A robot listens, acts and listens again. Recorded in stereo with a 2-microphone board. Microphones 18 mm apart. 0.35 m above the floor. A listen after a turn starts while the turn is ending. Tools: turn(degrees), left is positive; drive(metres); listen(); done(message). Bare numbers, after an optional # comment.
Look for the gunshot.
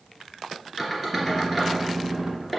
# The gunshot: about 70° right or 110° right.
turn(-70)
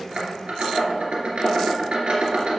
listen()
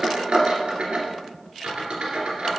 done("I heard a gunshot, but can't make it out now. It was about straight ahead or 40° right.")